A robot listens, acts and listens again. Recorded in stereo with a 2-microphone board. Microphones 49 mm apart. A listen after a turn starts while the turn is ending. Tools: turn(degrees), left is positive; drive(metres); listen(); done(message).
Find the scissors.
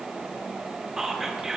listen()
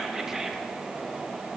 listen()
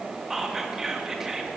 done("I can't make out scissors to turn to.")